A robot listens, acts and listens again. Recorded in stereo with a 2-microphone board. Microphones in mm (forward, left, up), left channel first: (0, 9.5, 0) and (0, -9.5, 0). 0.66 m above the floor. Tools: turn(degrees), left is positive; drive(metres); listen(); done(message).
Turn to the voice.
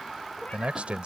turn(degrees=-65)
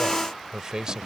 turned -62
turn(degrees=-45)
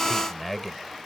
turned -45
done("Found it: a man speaking, straight ahead.")